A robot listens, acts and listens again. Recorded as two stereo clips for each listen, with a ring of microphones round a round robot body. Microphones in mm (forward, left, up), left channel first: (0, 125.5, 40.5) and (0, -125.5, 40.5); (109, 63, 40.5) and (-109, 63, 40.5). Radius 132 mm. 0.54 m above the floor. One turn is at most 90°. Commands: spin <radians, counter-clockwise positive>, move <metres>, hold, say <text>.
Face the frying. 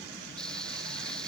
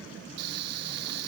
spin 1.57
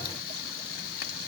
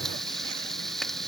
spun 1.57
spin 1.57
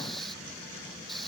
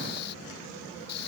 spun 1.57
say Facing the frying.